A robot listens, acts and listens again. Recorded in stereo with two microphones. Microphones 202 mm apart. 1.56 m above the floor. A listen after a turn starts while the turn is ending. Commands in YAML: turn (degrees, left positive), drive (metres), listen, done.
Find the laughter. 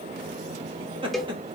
turn: -25
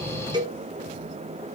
listen: true
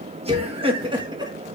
turn: -20
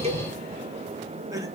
turn: -15
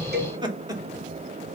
turn: -20
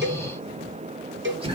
turn: -30
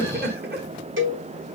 turn: -125
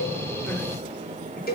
listen: true
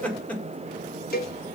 done: "Found it: laughter, straight ahead."